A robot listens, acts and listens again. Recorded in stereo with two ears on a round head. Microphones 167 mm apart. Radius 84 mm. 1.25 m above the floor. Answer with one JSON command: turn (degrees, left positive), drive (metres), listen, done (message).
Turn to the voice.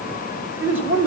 {"turn": -30}
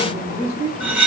{"turn": -145}
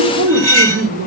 {"turn": -70}
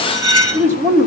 {"turn": -15}
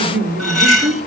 {"turn": -10}
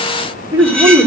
{"turn": -10}
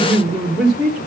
{"done": "Found it: a man speaking, straight ahead, 2 to 4 m away."}